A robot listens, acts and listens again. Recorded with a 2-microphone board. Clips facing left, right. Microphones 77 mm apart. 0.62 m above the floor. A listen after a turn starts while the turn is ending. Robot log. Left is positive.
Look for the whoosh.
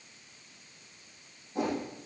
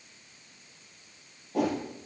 cmd yaw -90
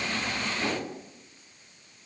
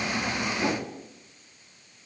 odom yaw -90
note: So it is at 15° right.
cmd yaw -15
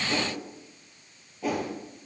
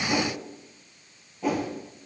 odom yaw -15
end: Facing the whoosh.